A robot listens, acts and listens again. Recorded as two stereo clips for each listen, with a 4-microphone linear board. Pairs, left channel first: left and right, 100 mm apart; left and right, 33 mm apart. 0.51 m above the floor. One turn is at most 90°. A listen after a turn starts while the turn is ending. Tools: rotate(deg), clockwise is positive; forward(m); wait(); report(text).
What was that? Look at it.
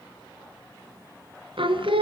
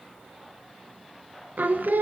rotate(65)
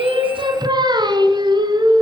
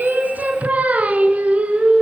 rotate(50)
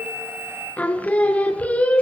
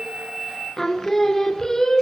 rotate(-15)
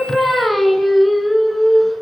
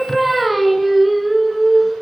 report("Found it: singing, straight ahead.")